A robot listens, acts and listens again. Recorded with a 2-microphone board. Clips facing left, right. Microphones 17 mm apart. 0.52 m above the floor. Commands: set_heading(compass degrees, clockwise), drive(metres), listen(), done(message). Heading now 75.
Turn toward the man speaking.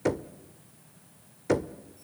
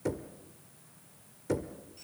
listen()
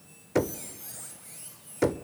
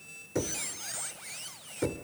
listen()
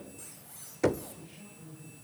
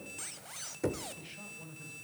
set_heading(135)
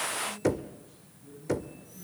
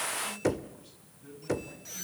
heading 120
set_heading(190)
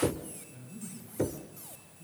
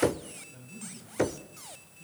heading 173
set_heading(193)
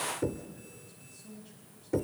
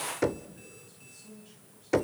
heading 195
done("Facing the man speaking.")